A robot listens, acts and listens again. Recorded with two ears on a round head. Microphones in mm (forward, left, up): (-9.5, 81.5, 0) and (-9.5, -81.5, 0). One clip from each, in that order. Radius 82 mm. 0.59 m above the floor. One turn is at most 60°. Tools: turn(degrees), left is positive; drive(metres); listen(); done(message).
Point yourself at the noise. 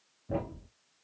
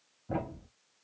turn(degrees=-20)
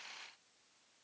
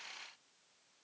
listen()
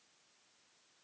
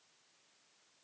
done("I heard a thud, but can't make it out now. It was about straight ahead or 140° right.")